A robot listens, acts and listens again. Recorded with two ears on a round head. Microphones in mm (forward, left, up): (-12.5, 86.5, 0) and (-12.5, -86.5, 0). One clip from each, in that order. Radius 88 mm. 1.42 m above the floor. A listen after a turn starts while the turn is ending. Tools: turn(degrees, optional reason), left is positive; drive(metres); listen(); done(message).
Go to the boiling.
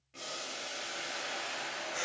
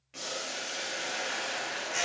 turn(degrees=-40, reason="The boiling: about 40° right or 140° right.")
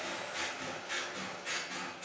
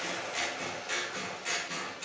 turn(degrees=-100, reason="So it is at 100° right.")
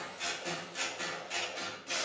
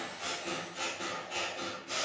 turn(degrees=30, reason="The boiling is now 30° left.")
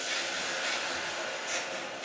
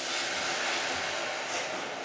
drive(metres=1.0)
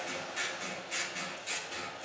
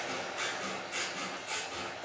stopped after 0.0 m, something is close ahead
done("Something is in my way. I am facing the boiling but have not reached it.")